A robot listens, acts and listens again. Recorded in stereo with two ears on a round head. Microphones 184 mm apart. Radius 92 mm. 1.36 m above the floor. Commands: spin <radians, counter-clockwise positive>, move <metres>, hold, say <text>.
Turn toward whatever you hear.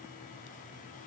hold
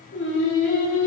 spin 1.13
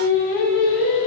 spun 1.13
spin 0.61
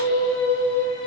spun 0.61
say Found it: singing, straight ahead, 2 to 4 m away.